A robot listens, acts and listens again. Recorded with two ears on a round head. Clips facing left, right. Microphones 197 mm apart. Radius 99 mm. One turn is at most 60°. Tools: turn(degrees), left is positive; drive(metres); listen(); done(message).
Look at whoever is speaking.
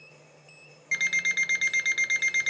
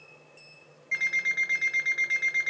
listen()
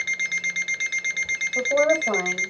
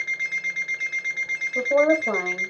turn(degrees=-25)
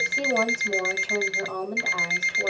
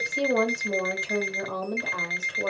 turn(degrees=-60)
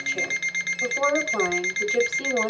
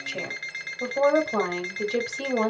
turn(degrees=-60)
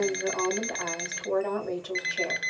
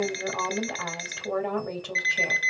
turn(degrees=-35)
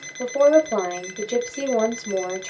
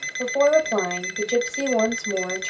done("Found it: a woman speaking, straight ahead.")